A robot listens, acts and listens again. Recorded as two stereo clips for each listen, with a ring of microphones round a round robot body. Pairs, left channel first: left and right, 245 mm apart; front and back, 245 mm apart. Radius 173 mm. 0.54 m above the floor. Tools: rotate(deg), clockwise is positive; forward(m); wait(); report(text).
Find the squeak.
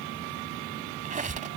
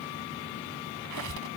rotate(150)
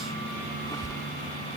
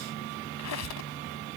rotate(-10)
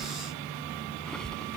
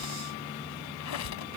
report("Facing the squeak.")